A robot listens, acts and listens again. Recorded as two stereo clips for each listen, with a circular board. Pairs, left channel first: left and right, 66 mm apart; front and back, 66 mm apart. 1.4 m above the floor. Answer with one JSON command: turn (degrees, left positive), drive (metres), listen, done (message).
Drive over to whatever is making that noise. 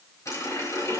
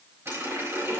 {"turn": 130}
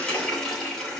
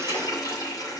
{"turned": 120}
{"turn": 10}
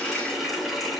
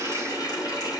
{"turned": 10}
{"drive": 1.0}
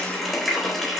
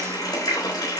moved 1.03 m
{"drive": 1.0}
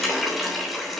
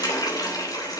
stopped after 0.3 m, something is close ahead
{"done": "Blocked. The running tap is further on, straight ahead."}